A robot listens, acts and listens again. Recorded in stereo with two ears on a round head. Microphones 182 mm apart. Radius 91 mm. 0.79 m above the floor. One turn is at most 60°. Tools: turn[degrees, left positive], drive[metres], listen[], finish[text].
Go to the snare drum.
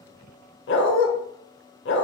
Action: listen[]
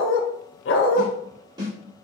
Thought: The snare drum: about 20° right or 160° right.
Action: turn[-20]
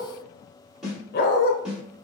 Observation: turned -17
Action: drive[1.0]
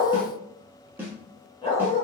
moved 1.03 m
Thought: The snare drum is now 10° right.
Action: turn[-10]
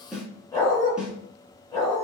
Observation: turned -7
Action: drive[1.0]
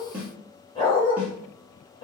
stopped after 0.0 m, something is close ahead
Thought: The snare drum is now 10° right.
Action: turn[-10]
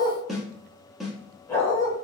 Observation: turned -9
Action: finish[Arrived at the snare drum, straight ahead.]